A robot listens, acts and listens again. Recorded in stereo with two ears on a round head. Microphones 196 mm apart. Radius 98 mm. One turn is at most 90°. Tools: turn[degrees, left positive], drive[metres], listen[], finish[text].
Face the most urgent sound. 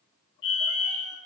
Thought: The fire alarm: about 60° left or 120° left.
Action: turn[60]
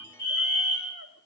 Thought: So it is at 50° left.
Action: turn[50]
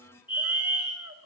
Thought: The fire alarm is now 25° left.
Action: turn[25]
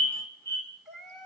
Thought: The fire alarm is now 10° left.
Action: turn[10]
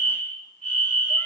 Action: finish[Facing the fire alarm.]